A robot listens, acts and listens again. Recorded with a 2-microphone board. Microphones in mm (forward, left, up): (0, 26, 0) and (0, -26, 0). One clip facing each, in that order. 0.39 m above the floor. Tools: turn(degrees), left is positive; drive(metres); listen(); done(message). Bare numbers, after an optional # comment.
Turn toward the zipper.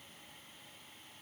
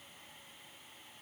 listen()
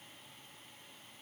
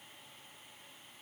listen()
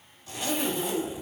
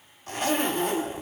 # The zipper: about 50° right or 130° right.
turn(-50)
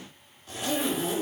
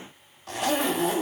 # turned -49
# So it is at 80° right.
turn(-80)
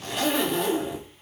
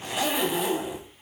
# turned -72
# The zipper is now 10° right.
turn(-10)
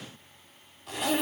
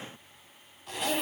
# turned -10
done("Facing the zipper.")